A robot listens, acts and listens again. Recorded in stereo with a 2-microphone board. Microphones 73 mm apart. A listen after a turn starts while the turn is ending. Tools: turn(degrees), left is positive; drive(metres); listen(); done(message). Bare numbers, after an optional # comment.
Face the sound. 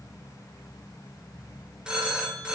turn(-30)
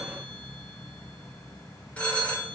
# So it is at 20° left.
turn(20)
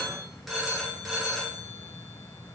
done("Found it: a phone ringing, straight ahead.")